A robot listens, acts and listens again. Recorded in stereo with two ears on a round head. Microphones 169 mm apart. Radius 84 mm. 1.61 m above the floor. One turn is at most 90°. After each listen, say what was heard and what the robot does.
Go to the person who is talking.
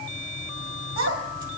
Turn 90° right.
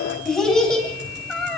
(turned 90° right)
Drive 1.0 m forward.
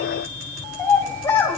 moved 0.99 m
The child speaking is now 10° left. Turn 10° left.
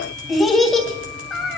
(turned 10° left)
Drive 1.0 m forward.
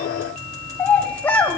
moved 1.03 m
The child speaking is now 10° left. Turn 10° left.
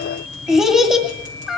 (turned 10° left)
Drive 1.0 m forward.
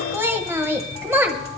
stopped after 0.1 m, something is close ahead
The child speaking is now 15° right. Turn 15° right.
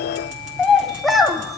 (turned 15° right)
Arrived at the child speaking, straight ahead.